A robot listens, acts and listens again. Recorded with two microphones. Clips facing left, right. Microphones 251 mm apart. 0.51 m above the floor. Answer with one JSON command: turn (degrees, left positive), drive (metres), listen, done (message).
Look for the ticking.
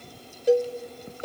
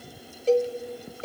{"listen": true}
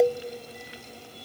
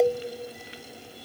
{"listen": true}
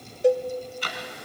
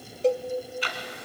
{"turn": 45}
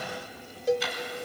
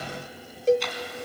{"done": "Facing the ticking."}